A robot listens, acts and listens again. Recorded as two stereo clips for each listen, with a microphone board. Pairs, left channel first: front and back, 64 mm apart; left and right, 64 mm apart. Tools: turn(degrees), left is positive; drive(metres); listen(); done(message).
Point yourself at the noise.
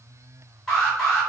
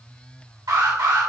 turn(degrees=-85)
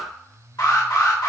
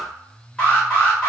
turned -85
turn(degrees=15)
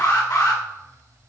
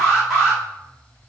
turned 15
done("Found it: an alarm, straight ahead, 1 to 2 m away.")